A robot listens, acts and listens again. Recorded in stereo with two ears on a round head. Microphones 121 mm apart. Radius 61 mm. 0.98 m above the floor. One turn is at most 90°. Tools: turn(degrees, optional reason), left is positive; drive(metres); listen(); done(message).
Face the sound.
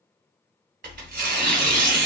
turn(degrees=-65, reason="The tearing paper: about 65° right or 115° right.")
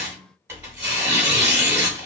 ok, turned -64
turn(degrees=-20, reason="So it is at 20° right.")
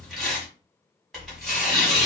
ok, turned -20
done("Found it: tearing paper, straight ahead.")